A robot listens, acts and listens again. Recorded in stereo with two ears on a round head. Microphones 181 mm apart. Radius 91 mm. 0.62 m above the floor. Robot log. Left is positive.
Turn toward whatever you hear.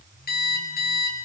note: The alarm clock: about 50° left or 130° left.
cmd yaw +50
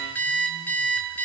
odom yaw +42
note: So it is at 10° left.
cmd yaw +10
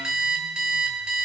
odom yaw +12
end: Found it: an alarm clock, straight ahead.